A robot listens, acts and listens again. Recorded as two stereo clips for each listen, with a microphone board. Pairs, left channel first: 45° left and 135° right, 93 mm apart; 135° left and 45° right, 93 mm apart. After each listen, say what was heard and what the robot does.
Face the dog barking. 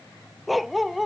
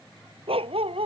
The dog barking: 45° right. Turn 45° right.
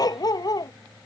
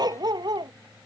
Facing the dog barking.